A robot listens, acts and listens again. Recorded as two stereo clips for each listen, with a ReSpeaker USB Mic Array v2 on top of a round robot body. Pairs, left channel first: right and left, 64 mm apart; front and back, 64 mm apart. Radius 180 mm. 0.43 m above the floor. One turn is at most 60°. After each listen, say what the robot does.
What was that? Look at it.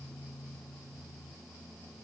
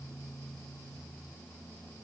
Keep listening.
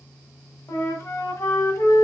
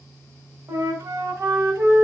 Turn 60° right.
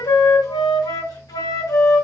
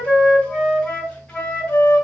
Turn 60° right.
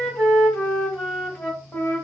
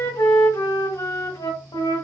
Turn 15° right.
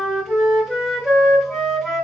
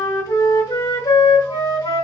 Found it: a flute, straight ahead.